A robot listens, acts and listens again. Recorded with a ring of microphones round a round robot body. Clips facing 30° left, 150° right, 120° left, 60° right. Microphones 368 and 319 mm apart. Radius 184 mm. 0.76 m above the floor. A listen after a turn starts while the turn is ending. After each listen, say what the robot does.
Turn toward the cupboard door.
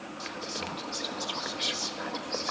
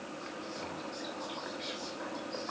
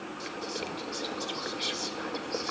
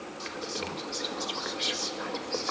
Keep listening.
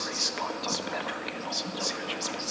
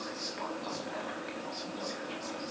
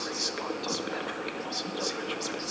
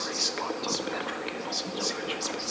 Keep listening.
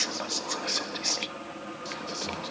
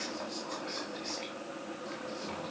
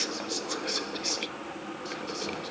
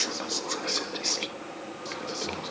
I can't make out a cupboard door to turn to.